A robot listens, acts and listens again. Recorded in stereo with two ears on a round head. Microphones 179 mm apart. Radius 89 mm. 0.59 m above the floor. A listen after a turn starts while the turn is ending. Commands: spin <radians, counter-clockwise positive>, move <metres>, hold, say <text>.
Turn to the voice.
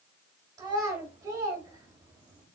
spin -0.35
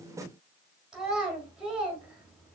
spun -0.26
say Found it: a child speaking, straight ahead, 1 to 2 m away.